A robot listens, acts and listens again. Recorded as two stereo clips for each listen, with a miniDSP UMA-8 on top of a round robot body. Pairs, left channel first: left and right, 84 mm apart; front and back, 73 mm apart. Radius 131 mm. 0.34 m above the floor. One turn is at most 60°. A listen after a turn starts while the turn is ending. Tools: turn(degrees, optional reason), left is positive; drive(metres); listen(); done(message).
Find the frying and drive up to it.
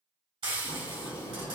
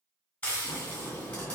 turn(degrees=-60, reason="The frying: 75° right.")
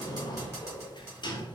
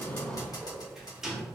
turn(degrees=-30, reason="The frying is now 30° right.")
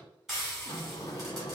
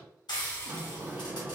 drive(metres=1.0)
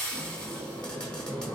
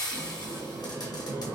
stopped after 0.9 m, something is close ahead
turn(degrees=15, reason="The frying is now 15° left.")
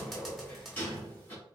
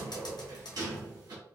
done("I am next to the frying.")